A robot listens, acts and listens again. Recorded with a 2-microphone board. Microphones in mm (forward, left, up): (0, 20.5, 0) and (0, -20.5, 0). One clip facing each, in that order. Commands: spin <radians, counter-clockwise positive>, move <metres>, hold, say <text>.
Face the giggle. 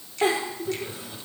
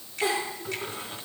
spin 0.79
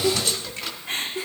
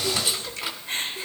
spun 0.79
spin 1.57
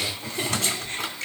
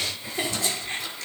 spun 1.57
spin -0.44
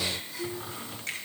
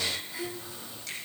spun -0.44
spin -0.44
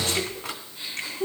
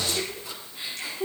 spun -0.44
spin -0.26
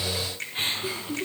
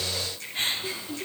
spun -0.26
say Found it: a giggle, straight ahead.